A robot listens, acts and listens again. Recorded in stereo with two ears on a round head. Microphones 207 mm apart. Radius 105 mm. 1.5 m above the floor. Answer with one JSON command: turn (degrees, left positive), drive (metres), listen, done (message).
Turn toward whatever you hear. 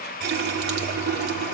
{"turn": -45}
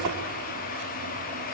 {"listen": true}
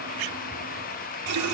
{"turn": -85}
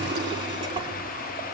{"turn": -20}
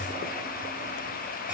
{"listen": true}
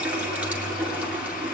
{"done": "Found it: a running tap, straight ahead, 2 to 4 m away."}